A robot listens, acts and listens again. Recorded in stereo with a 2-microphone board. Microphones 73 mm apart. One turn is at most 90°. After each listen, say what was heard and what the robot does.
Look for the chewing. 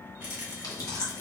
The chewing: about 55° left or 125° left. Turn 55° left.
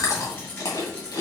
So it is at 60° left. Turn 60° left.
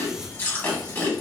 The chewing is now 30° left. Turn 30° left.
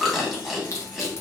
Facing the chewing, 1 to 2 m away.